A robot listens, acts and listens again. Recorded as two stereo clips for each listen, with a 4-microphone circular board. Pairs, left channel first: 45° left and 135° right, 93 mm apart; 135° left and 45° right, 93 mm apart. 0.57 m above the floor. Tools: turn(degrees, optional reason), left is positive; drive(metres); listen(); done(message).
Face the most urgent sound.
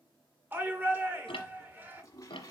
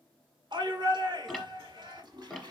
turn(degrees=-70, reason="The shout: 70° right.")
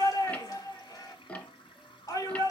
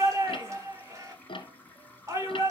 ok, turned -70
done("Found it: a shout, straight ahead.")